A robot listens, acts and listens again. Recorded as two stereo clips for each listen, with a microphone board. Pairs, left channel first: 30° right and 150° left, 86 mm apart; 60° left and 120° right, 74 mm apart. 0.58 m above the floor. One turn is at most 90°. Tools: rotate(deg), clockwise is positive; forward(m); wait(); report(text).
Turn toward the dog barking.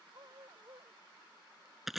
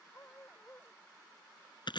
rotate(-90)
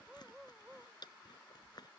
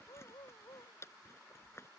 rotate(-65)
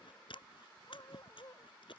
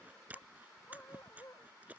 rotate(-15)
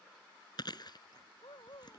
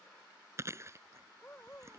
report("Found it: a dog barking, straight ahead.")